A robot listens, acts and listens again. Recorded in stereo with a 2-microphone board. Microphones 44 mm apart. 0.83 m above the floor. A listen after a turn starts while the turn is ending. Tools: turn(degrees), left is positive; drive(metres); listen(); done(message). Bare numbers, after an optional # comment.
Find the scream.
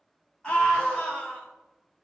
# The scream: about 20° left or 160° left.
turn(20)
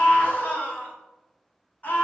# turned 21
# So it is at 135° left.
turn(135)
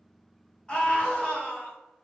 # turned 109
# The scream is now 25° left.
turn(25)
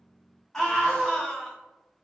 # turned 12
# The scream is now 15° left.
turn(15)
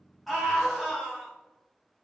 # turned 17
done("Facing the scream, 1 to 2 m away.")